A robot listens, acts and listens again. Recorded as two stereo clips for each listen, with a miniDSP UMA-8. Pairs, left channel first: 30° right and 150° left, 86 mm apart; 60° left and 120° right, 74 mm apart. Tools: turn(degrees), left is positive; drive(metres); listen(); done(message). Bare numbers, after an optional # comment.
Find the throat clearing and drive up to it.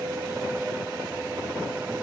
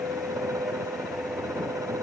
listen()
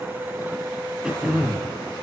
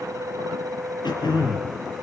# The throat clearing: 70° left.
turn(70)
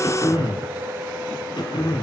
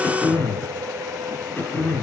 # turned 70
drive(1.0)
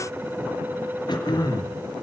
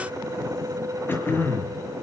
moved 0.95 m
drive(1.0)
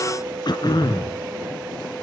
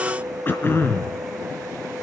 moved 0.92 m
drive(1.0)
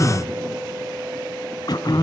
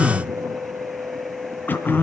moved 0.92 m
drive(1.0)
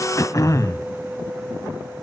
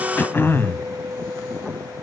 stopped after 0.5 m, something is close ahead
# The throat clearing is now 10° left.
turn(10)
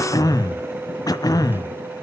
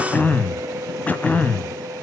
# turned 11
done("Arrived at the throat clearing, straight ahead.")